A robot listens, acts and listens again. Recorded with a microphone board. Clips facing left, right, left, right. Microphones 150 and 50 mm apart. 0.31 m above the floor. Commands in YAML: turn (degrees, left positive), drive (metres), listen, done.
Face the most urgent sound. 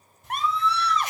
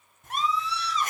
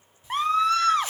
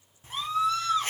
turn: 60
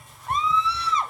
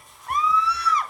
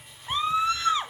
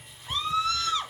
turn: 30
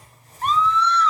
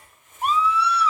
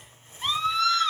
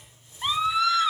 turn: -10
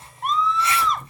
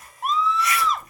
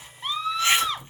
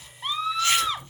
done: "Found it: a scream, straight ahead."